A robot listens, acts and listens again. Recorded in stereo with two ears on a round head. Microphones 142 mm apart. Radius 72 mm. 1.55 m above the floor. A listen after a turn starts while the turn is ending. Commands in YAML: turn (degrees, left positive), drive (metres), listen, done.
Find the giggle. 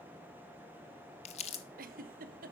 turn: -60
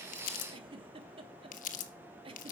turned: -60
turn: -40
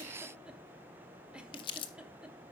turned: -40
listen: true
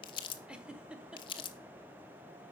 done: "Facing the giggle, 1 to 2 m away."